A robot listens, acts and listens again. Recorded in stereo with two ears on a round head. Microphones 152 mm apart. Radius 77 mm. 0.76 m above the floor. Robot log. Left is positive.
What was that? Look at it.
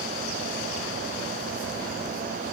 cmd idle
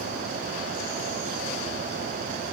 cmd idle
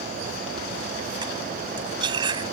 note: The cutlery clinking: about 30° right or 150° right.
cmd yaw -30
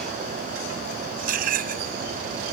note: So it is at 120° right.
cmd yaw -120
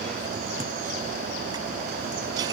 cmd idle
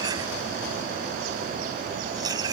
note: The cutlery clinking is now 25° right.
cmd yaw -25
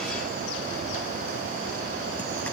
cmd idle
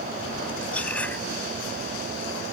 note: The cutlery clinking is now 10° left.
cmd yaw +10
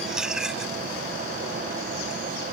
end: Found it: cutlery clinking, straight ahead.